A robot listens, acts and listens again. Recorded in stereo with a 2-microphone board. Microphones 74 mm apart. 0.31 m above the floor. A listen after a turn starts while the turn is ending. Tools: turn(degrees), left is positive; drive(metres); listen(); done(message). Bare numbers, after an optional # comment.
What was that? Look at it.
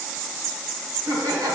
# The laughter: about 60° right or 120° right.
turn(-60)
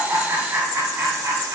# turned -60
# So it is at 40° right.
turn(-40)
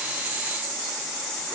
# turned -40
listen()
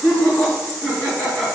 done("Facing the laughter, 2 to 4 m away.")